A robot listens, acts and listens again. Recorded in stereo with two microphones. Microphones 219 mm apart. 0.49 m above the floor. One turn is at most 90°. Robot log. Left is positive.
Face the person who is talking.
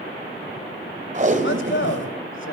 note: The man speaking: about 65° left or 115° left.
cmd yaw +65
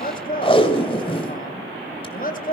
note: So it is at 45° left.
cmd yaw +45
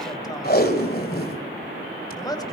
note: The man speaking is now 20° left.
cmd yaw +20
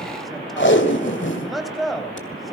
end: Facing the man speaking, 2 to 4 m away.